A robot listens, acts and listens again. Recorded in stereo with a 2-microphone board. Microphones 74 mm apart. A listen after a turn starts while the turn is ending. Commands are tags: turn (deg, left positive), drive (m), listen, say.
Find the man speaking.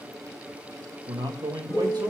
<turn deg="-70"/>
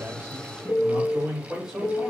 <turn deg="-10"/>
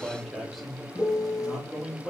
<say>Found it: a man speaking, straight ahead, over 4 m away.</say>